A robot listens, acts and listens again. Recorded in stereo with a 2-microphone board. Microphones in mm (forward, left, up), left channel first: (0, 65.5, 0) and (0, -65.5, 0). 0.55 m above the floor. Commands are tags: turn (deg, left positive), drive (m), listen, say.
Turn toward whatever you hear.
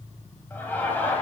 <turn deg="30"/>
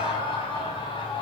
<turn deg="140"/>
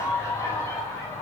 <turn deg="25"/>
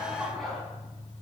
<say>Facing the laughter, over 4 m away.</say>